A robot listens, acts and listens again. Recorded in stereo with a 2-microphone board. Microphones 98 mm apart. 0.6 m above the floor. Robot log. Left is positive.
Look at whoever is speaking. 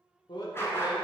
note: The man speaking: about 50° left or 130° left.
cmd yaw +50
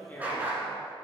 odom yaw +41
note: So it is at 25° left.
cmd yaw +25
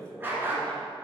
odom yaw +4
note: The man speaking is now 20° left.
cmd yaw +20
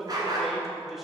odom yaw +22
end: Facing the man speaking, 1 to 2 m away.